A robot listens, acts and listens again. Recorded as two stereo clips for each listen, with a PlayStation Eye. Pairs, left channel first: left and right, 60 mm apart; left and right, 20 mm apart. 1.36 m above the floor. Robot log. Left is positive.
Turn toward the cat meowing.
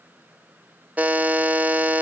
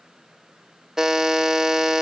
cmd idle
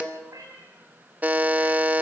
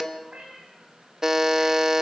note: The cat meowing: about 70° right or 110° right.
cmd yaw -70
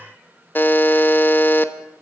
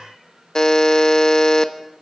cmd idle
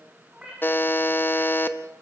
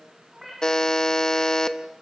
note: So it is at 15° right.
cmd yaw -15
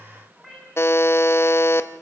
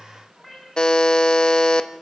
end: Found it: a cat meowing, straight ahead.